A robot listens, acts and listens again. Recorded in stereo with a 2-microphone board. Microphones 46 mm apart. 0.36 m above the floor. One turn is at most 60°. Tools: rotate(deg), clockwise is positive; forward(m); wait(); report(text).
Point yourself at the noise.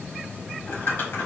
rotate(-50)
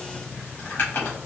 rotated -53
rotate(-60)
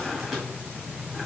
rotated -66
report("Facing the crumpling, 1 to 2 m away.")